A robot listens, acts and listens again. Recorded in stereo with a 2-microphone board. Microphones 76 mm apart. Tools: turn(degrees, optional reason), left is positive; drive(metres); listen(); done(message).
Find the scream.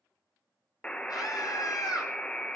turn(degrees=60, reason="The scream: about 60° left or 120° left.")
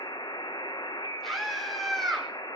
done("Found it: a scream, straight ahead, over 4 m away.")